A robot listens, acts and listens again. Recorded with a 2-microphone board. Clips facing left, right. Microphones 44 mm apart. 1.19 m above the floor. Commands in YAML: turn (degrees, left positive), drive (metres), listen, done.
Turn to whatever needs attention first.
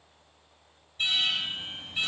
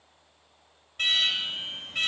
turn: -65
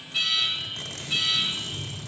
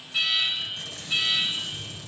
done: "Facing the alarm, over 4 m away."